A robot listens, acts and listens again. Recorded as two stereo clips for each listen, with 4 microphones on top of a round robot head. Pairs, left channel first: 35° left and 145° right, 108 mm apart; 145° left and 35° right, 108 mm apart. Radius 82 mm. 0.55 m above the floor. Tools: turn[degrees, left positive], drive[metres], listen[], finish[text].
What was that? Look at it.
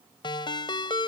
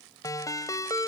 Thought: The ringtone: 85° left.
Action: turn[85]
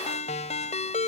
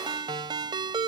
Thought: The ringtone is now 15° left.
Action: turn[15]
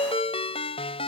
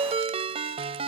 Action: finish[Facing the ringtone.]